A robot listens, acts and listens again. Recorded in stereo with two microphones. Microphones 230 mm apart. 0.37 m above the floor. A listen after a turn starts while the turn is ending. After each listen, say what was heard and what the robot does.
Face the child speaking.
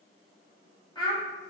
The child speaking: about 20° left or 160° left. Turn 20° left.
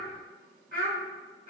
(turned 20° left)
So it is at 140° left. Turn 140° left.
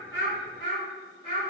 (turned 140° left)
The child speaking is now 25° left. Turn 25° left.
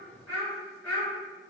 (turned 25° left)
Found it: a child speaking, straight ahead, 2 to 4 m away.